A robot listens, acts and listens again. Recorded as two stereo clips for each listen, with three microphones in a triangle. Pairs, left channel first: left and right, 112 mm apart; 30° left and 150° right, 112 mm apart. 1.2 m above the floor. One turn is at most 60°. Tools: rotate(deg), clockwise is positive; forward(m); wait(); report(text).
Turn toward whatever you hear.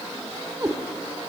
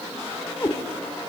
rotate(30)
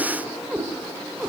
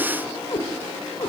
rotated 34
rotate(15)
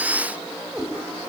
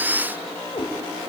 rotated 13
report("Found it: a cat meowing, straight ahead.")